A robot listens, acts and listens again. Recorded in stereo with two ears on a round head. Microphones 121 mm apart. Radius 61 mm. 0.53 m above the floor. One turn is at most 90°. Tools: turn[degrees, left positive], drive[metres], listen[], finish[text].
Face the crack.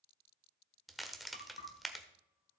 Action: turn[30]
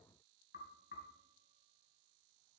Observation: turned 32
Action: listen[]
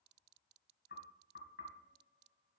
Action: finish[I heard a crack, but can't make it out now. It was about 35° right or 150° left.]